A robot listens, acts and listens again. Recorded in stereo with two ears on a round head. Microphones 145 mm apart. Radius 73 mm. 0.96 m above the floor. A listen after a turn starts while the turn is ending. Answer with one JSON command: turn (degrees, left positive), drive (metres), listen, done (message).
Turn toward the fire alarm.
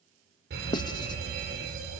{"turn": -90}
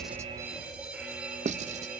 {"turn": -10}
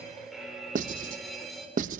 {"done": "Facing the fire alarm."}